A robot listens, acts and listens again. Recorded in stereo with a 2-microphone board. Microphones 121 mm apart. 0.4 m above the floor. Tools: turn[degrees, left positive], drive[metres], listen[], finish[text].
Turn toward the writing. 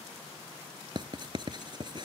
Thought: The writing: about 40° right or 140° right.
Action: turn[-40]
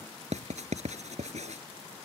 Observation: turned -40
Thought: So it is at 100° right.
Action: turn[-100]
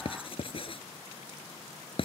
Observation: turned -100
Thought: The writing is now 50° left.
Action: turn[50]
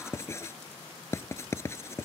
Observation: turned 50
Thought: The writing is now 25° left.
Action: turn[25]
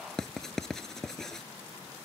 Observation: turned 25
Action: finish[Facing the writing.]